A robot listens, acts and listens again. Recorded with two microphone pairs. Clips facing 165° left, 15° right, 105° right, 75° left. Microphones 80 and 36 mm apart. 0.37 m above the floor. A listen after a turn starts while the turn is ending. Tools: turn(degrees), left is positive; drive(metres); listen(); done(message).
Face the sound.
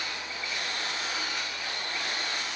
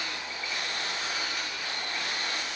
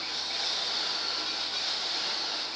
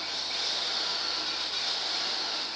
listen()
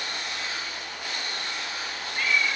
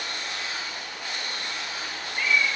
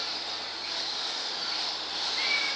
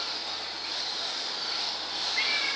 turn(degrees=145)
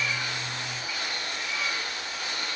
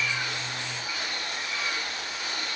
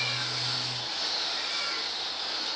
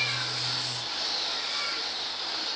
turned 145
listen()
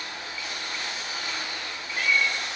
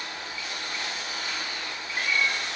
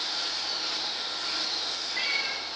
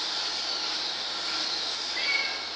turn(degrees=-10)
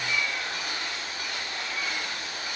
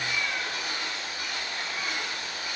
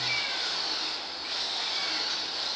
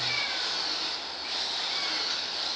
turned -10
done("Found it: a cat meowing, straight ahead, 2 to 4 m away.")